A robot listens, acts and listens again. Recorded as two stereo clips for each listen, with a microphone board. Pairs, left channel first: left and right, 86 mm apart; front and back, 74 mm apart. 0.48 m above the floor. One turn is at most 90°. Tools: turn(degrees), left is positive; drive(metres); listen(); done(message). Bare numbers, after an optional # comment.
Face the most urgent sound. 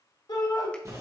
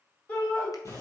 # The shout: 70° left.
turn(70)
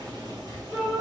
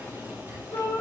done("Found it: a shout, straight ahead, 2 to 4 m away.")